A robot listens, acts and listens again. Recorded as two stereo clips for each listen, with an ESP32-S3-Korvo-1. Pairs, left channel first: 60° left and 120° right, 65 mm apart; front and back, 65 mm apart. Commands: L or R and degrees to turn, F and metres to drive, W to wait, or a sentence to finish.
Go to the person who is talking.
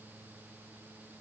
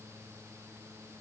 W
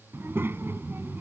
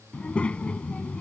R70
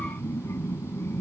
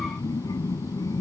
L15
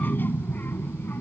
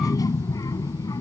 F1.0
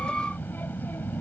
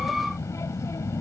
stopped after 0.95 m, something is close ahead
L10
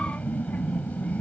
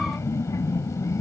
Arrived at the child speaking, straight ahead.